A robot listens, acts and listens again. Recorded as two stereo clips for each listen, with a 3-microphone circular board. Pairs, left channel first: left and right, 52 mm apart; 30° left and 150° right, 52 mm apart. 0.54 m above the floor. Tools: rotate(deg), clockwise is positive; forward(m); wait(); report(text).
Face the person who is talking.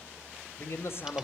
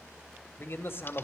rotate(-60)
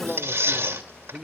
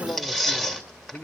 report("Facing the man speaking, 2 to 4 m away.")